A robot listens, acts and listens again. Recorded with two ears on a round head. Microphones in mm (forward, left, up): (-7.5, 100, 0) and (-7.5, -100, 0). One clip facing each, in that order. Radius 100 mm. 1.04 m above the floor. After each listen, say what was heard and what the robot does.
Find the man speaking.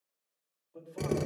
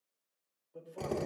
Turn 30° left.
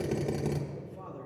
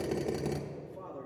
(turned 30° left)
Turn 30° left.
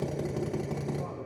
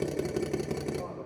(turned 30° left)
Keep listening.
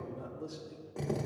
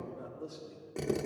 So it is at 155° left. Turn 155° left.
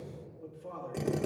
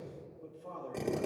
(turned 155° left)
The man speaking is now 15° left. Turn 15° left.
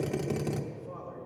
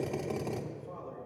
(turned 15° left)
Facing the man speaking.